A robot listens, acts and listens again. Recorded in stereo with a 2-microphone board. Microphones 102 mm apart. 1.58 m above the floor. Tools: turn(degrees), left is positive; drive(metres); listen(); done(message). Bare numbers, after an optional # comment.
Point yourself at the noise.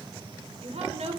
turn(-90)
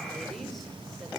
listen()
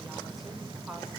listen()
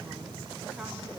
done("Facing where the woman speaking came from. I can't hear it now.")